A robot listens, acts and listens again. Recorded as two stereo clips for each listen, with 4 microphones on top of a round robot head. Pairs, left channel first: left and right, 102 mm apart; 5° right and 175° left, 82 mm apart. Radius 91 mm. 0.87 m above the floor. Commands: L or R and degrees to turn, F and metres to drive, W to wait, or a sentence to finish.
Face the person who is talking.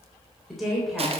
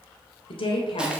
Found it: a woman speaking, straight ahead, 2 to 4 m away.